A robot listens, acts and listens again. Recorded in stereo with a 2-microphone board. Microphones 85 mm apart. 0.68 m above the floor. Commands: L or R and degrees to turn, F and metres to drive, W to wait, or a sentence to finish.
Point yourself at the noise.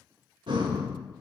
R70
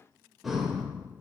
Found it: breathing, straight ahead.